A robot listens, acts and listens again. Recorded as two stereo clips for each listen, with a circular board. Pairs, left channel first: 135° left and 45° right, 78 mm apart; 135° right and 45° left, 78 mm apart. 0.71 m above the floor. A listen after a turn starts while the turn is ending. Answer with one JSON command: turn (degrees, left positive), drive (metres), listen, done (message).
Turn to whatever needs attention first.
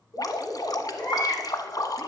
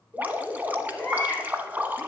{"turn": 150}
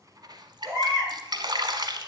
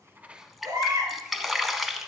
{"turn": -10}
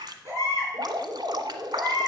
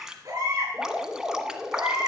{"done": "Facing the baby crying."}